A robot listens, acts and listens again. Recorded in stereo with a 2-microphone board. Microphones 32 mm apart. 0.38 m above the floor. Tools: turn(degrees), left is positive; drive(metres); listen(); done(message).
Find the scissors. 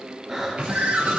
turn(degrees=-45)
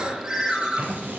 turn(degrees=-90)
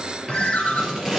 turn(degrees=-10)
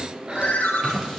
done("Found it: scissors, straight ahead.")